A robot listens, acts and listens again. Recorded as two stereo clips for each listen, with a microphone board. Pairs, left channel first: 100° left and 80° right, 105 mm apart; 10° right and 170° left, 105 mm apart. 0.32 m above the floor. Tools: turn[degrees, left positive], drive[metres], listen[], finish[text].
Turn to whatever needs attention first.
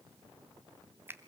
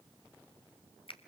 Action: listen[]
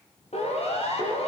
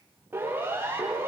Thought: The siren: 100° left.
Action: turn[100]
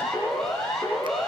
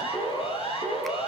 Thought: The siren is now 15° left.
Action: turn[15]
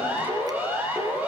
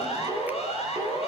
Action: finish[Facing the siren.]